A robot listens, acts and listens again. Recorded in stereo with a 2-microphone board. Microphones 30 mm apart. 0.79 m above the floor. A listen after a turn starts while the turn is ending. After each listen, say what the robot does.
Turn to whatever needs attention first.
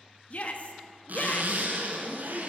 Turn 50° left.
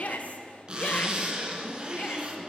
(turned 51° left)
Keep listening.
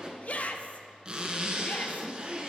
Turn 65° left.
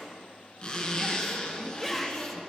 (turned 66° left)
Facing the shout.